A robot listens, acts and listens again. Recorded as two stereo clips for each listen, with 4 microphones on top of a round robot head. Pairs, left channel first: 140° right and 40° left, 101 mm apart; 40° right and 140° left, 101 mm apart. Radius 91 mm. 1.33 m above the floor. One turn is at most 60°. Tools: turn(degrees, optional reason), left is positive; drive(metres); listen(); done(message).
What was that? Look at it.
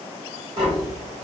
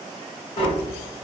done("Facing the tapping, 1 to 2 m away.")